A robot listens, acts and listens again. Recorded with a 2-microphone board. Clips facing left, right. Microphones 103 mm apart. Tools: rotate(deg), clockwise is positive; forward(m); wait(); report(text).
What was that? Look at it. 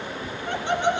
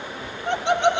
rotate(70)
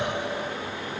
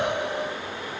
rotate(65)
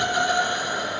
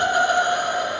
rotate(50)
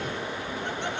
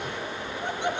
rotate(15)
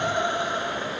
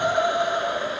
rotate(10)
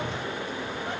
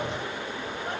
wait()
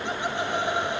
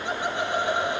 report("Found it: laughter, straight ahead, 2 to 4 m away.")